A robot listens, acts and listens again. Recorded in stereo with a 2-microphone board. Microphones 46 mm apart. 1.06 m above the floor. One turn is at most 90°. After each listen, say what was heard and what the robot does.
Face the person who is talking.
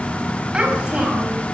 The child speaking: about 20° right or 160° right. Turn 20° right.
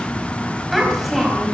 Facing the child speaking, over 4 m away.